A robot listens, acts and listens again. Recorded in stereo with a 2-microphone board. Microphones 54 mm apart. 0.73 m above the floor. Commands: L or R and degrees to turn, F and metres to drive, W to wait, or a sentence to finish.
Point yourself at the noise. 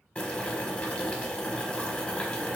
L25
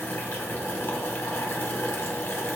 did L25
L130
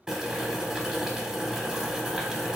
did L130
R15
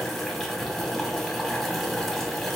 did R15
Facing the boiling.